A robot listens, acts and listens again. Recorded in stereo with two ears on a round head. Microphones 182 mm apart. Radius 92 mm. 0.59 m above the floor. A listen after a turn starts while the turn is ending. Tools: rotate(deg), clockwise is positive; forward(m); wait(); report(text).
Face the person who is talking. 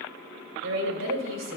rotate(65)
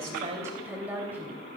rotate(10)
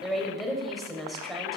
report("Found it: a woman speaking, straight ahead, 2 to 4 m away.")